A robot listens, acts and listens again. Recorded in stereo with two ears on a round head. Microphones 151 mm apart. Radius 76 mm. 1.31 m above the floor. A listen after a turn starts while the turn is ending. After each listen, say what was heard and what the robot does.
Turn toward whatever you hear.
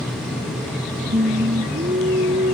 The singing: about 45° right or 135° right. Turn 45° right.
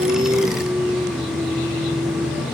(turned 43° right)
So it is at 10° right. Turn 10° right.
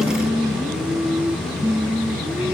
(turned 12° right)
The singing is now 10° right. Turn 10° right.
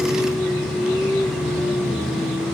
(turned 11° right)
Facing the singing.